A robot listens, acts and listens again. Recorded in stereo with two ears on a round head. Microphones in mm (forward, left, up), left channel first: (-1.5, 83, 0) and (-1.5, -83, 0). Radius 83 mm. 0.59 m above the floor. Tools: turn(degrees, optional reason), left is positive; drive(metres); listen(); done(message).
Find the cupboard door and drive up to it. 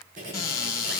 turn(degrees=20, reason="The cupboard door: about 20° left or 160° left.")
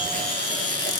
listen()
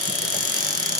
drive(metres=1.0)
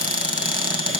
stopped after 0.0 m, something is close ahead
turn(degrees=-10, reason="The cupboard door is now 10° right.")
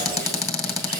done("Something is in my way. I am facing the cupboard door but have not reached it.")